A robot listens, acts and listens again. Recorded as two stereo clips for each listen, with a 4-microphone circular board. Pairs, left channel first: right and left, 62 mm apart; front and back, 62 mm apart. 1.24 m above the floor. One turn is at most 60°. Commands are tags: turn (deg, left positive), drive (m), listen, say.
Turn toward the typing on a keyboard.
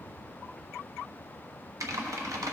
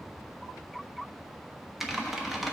<turn deg="60"/>
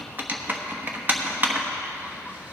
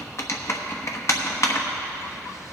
<turn deg="35"/>
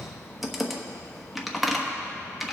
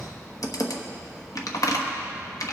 <say>Found it: typing on a keyboard, straight ahead.</say>